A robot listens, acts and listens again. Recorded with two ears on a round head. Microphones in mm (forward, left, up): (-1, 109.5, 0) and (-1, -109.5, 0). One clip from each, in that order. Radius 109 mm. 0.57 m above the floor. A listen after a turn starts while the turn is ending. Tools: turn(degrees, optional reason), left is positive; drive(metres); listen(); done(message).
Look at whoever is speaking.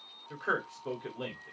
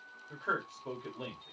turn(degrees=30)
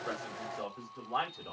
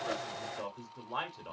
turn(degrees=-20, reason="So it is at 20° right.")
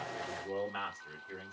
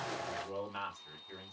done("Facing the man speaking.")